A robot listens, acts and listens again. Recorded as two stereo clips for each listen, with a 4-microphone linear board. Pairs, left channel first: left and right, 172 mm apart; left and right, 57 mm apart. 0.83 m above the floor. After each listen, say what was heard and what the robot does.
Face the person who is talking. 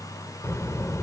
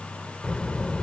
The child speaking: about 15° left or 165° left. Turn 15° left.
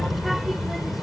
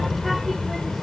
Facing the child speaking.